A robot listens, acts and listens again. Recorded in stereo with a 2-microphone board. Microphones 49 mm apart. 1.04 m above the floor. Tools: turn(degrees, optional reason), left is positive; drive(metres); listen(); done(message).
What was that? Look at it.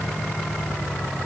listen()
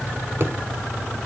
turn(degrees=-45, reason="The thud: about 45° right or 135° right.")
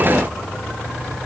listen()
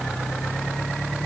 done("I heard a thud, but can't make it out now. It was about straight ahead or 90° right.")